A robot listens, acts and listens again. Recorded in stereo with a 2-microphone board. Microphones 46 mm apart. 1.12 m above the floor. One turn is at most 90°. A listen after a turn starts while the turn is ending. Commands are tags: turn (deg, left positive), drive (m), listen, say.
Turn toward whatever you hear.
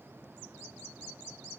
<listen/>
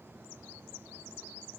<listen/>
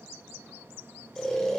<turn deg="30"/>
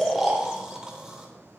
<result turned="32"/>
<turn deg="-20"/>
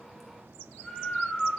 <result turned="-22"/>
<say>Facing the snoring.</say>